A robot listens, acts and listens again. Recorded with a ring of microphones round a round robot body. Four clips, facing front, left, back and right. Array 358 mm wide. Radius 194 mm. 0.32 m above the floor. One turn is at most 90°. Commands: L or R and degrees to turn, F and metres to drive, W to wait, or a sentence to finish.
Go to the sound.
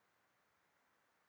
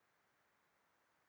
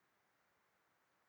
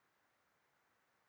W
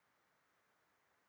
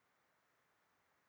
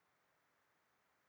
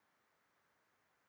W
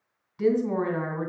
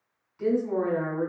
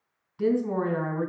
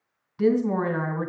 R80
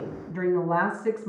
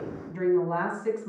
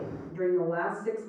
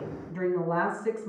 F1.0
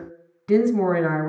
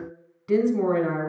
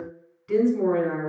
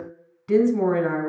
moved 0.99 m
F1.0
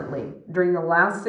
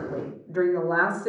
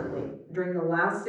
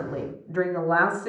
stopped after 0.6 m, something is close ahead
Arrived at the woman speaking, straight ahead.